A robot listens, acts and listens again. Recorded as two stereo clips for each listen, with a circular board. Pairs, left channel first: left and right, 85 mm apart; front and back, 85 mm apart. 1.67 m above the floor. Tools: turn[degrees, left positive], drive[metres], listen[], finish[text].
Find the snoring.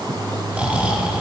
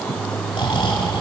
Thought: The snoring: 15° right.
Action: turn[-15]
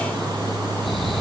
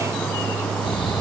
Action: listen[]
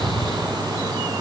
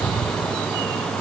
Action: listen[]
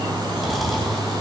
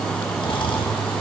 Action: finish[Found it: snoring, straight ahead.]